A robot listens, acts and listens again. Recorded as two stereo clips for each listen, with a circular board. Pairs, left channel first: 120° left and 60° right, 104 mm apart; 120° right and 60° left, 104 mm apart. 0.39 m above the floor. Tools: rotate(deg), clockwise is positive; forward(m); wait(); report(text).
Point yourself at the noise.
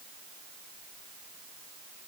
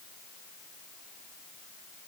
wait()
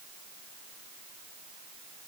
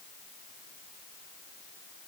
wait()
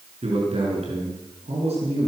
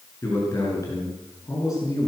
rotate(65)
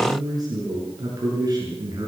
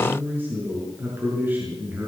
rotate(10)
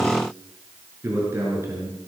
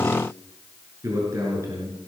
report("Facing the man speaking.")